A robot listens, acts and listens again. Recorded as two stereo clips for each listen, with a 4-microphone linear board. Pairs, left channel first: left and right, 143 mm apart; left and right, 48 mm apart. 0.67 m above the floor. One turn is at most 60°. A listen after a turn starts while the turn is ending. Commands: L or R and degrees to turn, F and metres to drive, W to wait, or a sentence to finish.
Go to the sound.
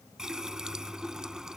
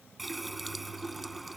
R30
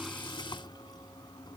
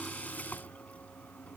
L30
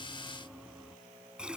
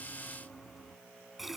F1.0
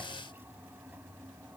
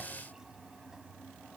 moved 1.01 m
R15
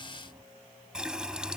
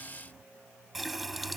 F1.0
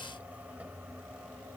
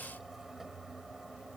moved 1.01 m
R10
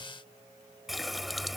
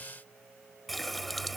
F1.0
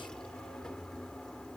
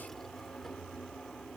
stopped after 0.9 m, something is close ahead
Arrived at the running tap, straight ahead.